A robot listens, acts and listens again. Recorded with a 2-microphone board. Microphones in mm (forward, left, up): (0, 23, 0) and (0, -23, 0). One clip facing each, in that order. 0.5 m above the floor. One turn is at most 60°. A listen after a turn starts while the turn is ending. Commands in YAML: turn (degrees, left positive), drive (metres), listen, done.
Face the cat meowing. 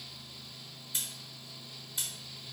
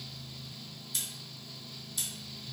listen: true
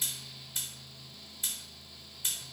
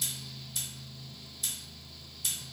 listen: true
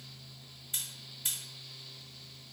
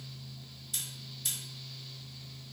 done: "I can't make out a cat meowing, only scissors."